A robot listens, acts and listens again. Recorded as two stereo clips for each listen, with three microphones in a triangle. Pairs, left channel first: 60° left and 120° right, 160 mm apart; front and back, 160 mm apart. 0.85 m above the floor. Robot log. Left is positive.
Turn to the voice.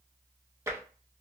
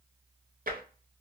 cmd idle
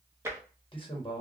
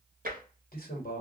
end: Facing the man speaking, 1 to 2 m away.